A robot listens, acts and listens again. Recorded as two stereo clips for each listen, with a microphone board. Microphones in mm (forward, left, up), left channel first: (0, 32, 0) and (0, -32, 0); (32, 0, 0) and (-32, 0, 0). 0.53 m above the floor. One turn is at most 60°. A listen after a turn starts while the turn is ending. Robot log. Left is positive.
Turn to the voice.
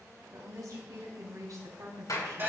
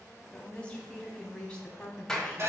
note: The woman speaking: 70° right.
cmd yaw -60
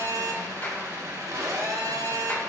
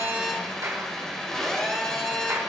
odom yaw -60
note: Nothing new. It was at 10° right.
cmd yaw -10
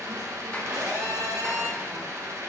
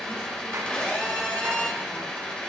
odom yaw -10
cmd idle
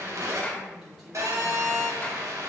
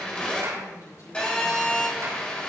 end: Found it: a woman speaking, straight ahead.